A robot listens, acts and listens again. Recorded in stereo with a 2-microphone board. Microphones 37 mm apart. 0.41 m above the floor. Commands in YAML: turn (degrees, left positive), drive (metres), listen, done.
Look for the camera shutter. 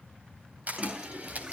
turn: -40
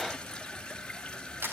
turn: -90
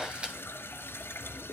turn: -25
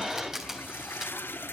turn: -10
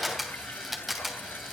done: "Facing the camera shutter, 2 to 4 m away."